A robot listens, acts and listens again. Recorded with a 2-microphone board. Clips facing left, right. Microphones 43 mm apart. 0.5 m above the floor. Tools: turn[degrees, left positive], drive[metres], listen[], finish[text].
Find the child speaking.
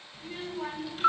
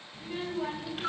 Action: turn[-30]
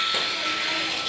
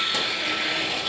Action: listen[]
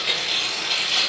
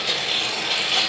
Thought: So it is at 20° left.
Action: turn[20]
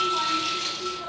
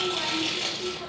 Action: finish[Facing the child speaking, 1 to 2 m away.]